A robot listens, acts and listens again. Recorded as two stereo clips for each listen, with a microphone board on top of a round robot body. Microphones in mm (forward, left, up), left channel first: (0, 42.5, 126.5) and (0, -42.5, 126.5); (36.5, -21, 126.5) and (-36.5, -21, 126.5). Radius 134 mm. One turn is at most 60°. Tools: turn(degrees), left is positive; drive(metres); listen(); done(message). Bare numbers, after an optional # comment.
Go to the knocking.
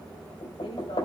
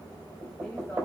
# The knocking: 115° left.
turn(60)
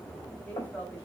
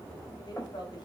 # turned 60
# Nothing new. It was at 55° left.
turn(55)
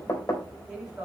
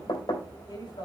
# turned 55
# The knocking is now 25° left.
turn(25)
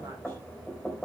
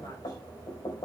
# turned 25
drive(1.0)
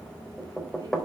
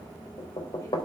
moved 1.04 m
drive(1.0)
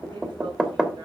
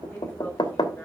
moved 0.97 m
# The knocking is now 10° right.
turn(-10)
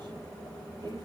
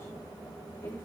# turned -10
listen()
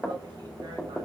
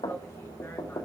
drive(1.0)
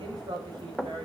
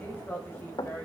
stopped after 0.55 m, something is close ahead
done("I am next to the knocking.")